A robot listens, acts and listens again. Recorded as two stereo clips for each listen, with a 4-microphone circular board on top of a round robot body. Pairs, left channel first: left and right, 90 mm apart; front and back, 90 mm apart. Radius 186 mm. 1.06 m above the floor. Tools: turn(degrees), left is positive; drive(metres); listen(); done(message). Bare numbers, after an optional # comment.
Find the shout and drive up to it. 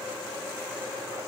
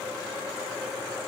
listen()
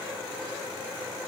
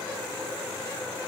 listen()
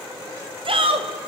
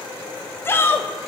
# The shout: 65° right.
turn(-65)
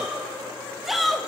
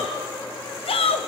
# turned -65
drive(1.0)
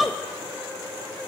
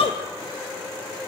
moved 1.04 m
drive(1.0)
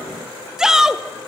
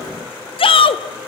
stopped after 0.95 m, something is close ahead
done("I am next to the shout.")